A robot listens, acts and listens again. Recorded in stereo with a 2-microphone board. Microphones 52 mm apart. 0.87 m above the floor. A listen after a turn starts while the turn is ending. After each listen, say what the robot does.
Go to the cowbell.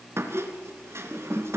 Keep listening.
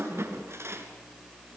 Keep listening.
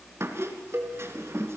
Turn 50° right.
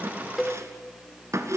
Drive 1.0 m forward.
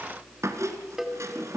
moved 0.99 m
Drive 1.0 m forward.
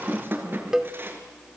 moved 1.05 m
Turn 15° right.
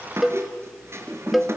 Drive 1.0 m forward.
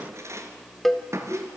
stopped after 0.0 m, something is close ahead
I am next to the cowbell.